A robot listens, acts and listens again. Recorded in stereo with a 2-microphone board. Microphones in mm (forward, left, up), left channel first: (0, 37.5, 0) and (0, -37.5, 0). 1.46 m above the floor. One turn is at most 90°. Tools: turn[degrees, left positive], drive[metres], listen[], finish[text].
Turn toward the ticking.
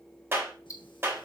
Thought: The ticking: about 45° left or 135° left.
Action: turn[45]
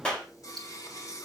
Action: listen[]
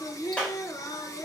Action: listen[]
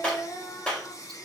Action: finish[I heard ticking, but can't make it out now. It was about straight ahead or 90° left.]